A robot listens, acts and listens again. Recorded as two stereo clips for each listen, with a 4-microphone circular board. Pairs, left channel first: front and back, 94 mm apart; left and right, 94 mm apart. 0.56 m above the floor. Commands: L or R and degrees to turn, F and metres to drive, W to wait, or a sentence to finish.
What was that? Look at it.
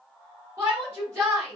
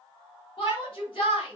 L120
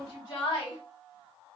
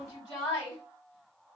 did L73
L45
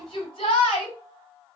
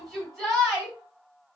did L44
Found it: a shout, straight ahead.